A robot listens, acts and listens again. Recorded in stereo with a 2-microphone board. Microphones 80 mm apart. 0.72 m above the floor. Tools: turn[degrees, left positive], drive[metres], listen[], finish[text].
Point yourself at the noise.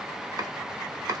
Thought: The chopping: about 50° right or 130° right.
Action: turn[-50]
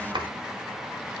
Thought: So it is at 75° right.
Action: turn[-75]
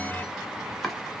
Action: finish[Facing the chopping.]